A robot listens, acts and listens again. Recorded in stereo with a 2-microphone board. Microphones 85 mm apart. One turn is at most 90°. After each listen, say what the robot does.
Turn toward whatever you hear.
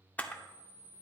Turn 15° left.
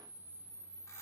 Turn 90° left.
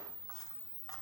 Turn 50° left.
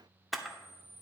Facing the camera shutter.